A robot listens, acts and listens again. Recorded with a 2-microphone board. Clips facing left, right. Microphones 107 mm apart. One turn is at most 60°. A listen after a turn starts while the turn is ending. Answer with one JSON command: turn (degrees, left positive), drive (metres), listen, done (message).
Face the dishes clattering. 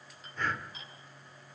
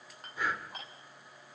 {"turn": -55}
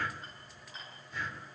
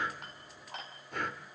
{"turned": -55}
{"turn": -60}
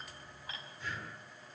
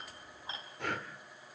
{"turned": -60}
{"turn": -25}
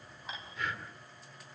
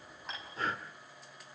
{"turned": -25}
{"listen": true}
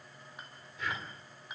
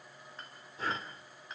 {"turn": 10}
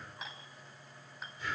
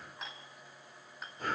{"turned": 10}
{"done": "Facing the dishes clattering, over 4 m away."}